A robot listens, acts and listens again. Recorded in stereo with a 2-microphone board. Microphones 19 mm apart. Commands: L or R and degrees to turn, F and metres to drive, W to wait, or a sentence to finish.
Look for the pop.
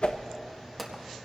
L30
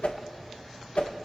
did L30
W
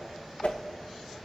I heard a pop, but can't make it out now. It was about 25° right or 145° left.